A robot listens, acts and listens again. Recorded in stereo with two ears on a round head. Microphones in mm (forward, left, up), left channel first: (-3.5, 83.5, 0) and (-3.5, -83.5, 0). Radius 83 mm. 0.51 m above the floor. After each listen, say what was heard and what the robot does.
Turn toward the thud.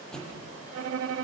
Turn 30° left.
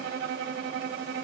Keep listening.
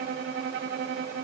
I heard a thud, but can't make it out now. It was about 25° right or 145° left.